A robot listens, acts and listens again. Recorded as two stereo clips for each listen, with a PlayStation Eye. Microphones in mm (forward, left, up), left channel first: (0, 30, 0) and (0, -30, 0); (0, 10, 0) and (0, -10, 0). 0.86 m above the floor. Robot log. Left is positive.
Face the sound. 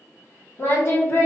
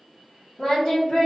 note: The singing: about 50° left or 130° left.
cmd yaw +50
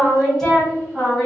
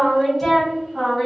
note: So it is at 15° left.
cmd yaw +15
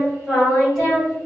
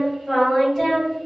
end: Found it: singing, straight ahead, 2 to 4 m away.